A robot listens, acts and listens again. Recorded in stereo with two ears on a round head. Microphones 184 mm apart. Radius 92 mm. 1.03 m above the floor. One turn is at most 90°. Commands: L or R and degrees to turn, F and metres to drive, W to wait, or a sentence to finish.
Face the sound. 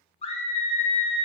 L30
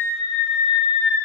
L90
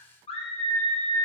L30
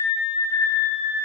L20
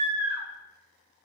R10
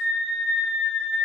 Facing the scream.